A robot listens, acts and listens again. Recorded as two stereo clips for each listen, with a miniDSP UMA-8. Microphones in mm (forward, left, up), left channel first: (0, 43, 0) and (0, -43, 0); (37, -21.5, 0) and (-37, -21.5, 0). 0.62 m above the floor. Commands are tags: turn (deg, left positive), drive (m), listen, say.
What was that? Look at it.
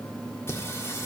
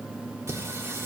<turn deg="140"/>
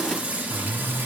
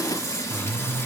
<turn deg="-35"/>
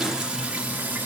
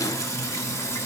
<turn deg="-30"/>
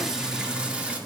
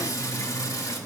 <turn deg="-20"/>
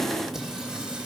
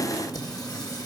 <turn deg="-10"/>
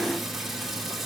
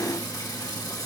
<say>Found it: singing, straight ahead, 1 to 2 m away.</say>